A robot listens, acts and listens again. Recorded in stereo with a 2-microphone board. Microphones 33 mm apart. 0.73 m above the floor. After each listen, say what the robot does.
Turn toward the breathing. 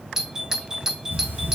Turn 70° right.
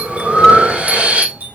Turn 40° right.
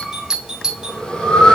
Turn 25° left.
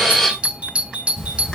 Facing the breathing.